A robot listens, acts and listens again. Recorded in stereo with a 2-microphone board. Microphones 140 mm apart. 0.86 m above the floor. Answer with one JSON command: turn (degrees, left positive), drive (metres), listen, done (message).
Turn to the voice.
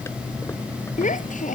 {"turn": 70}
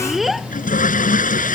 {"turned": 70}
{"done": "Facing the child speaking."}